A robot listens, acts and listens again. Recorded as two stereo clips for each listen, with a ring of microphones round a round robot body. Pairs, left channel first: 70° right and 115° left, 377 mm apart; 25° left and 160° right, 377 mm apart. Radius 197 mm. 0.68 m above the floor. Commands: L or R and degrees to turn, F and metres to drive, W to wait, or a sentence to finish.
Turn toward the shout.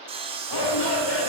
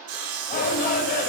R45
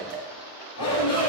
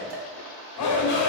R20
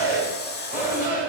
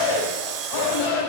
Facing the shout, 2 to 4 m away.